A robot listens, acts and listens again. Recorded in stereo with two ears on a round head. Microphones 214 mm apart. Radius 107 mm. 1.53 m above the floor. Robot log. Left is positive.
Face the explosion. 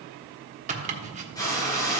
note: The explosion: about 65° left or 115° left.
cmd yaw +65
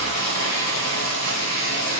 cmd idle
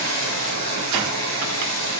end: I heard an explosion, but can't make it out now. It was about straight ahead or 50° left.